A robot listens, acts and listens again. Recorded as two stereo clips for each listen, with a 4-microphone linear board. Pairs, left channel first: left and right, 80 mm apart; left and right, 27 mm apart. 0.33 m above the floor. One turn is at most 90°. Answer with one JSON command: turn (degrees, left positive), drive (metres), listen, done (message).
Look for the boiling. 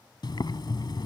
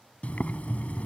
{"turn": 65}
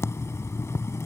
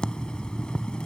{"turn": 40}
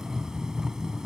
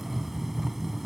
{"turn": -10}
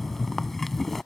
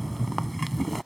{"done": "Facing the boiling."}